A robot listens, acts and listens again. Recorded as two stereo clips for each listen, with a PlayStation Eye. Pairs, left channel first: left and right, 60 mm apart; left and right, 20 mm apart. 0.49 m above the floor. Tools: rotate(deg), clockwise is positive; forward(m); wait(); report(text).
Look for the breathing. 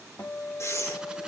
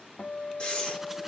rotate(-55)
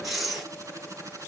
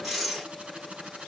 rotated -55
report("Facing the breathing, over 4 m away.")